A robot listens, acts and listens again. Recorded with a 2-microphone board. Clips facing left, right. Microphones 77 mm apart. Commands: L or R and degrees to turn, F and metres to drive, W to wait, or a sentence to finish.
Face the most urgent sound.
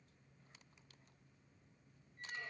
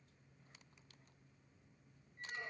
W
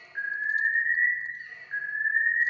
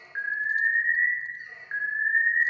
R45
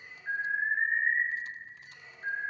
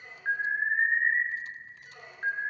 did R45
R85
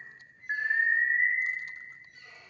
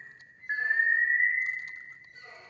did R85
Facing the alarm, 2 to 4 m away.